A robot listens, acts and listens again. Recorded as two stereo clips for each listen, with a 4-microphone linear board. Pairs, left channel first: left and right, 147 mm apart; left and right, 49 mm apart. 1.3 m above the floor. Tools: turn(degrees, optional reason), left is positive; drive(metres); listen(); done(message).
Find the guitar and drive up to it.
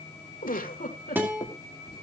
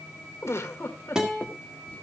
turn(degrees=-30)
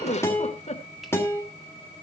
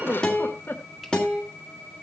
turn(degrees=15, reason="So it is at 15° left.")
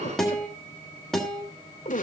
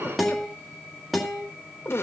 drive(metres=1.0)
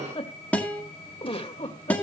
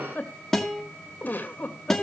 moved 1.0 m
turn(degrees=10, reason="The guitar is now 10° left.")
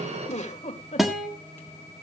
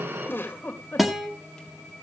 drive(metres=1.0)
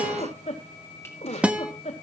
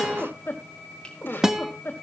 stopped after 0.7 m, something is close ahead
turn(degrees=-10, reason="The guitar is now 10° right.")
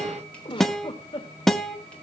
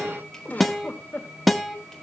done("Arrived at the guitar, straight ahead.")